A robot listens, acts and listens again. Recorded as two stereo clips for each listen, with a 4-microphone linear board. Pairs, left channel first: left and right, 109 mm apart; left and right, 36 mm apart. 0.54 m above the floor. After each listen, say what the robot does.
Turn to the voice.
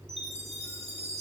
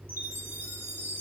Keep listening.
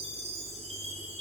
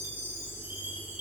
Keep listening.
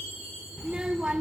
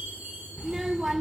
Turn 30° right.
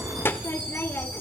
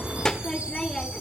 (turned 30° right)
Turn 20° left.
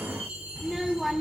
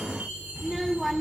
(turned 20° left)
Facing the child speaking.